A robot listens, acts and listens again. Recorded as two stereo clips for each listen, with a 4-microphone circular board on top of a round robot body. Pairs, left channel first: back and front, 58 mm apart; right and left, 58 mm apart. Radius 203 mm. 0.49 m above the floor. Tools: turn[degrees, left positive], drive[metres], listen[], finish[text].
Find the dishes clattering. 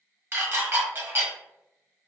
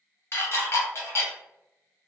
Thought: The dishes clattering: 45° right.
Action: turn[-45]
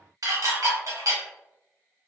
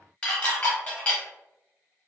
Thought: The dishes clattering is now 20° right.
Action: turn[-20]
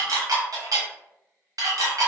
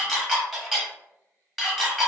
Action: finish[Found it: dishes clattering, straight ahead.]